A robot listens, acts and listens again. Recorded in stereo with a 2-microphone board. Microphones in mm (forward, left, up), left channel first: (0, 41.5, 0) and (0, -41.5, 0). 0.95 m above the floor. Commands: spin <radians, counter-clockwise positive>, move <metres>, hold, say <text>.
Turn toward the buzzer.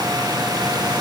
hold
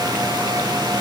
hold
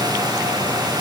say I can't make out a buzzer.